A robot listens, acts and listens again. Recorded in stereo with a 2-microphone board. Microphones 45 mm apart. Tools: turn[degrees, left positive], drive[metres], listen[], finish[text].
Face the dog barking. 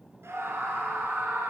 Action: listen[]
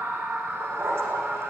Thought: The dog barking: about 65° right or 115° right.
Action: turn[-65]
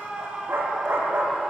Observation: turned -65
Thought: So it is at 55° right.
Action: turn[-55]
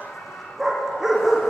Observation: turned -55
Action: finish[Facing the dog barking.]